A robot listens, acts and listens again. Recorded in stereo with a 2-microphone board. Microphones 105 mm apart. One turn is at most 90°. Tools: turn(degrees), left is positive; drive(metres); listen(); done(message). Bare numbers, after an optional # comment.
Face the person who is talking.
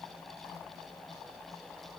listen()
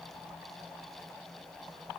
listen()
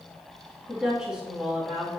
turn(-30)
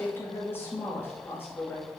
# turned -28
# So it is at 20° left.
turn(20)
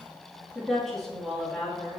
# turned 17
done("Facing the woman speaking.")